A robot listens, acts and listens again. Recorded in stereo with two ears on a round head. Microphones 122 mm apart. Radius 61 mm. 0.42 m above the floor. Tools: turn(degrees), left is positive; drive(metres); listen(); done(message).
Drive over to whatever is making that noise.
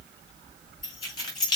turn(degrees=35)
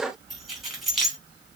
drive(metres=1.0)
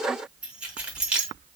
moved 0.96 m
turn(degrees=-10)
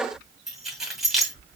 drive(metres=1.0)
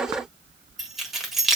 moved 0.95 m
drive(metres=1.0)
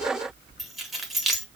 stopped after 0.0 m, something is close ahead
done("I am next to the keys jangling.")